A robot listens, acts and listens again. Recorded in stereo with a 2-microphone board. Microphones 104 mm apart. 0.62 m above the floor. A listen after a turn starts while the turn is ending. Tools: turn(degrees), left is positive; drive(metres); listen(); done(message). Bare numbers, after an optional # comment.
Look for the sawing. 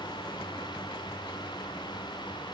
listen()
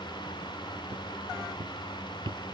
listen()
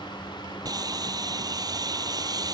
# The sawing: about 40° right or 140° right.
turn(-40)
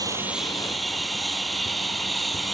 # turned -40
done("Facing the sawing.")